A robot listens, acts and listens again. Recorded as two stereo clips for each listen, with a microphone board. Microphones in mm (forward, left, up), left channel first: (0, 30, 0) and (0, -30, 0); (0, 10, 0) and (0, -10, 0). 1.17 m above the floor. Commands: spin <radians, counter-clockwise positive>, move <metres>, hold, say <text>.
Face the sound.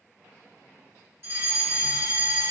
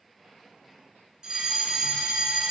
spin -0.79
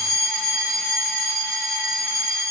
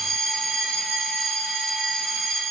spin -0.17
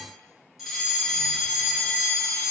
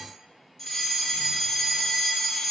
say Facing the fire alarm, 2 to 4 m away.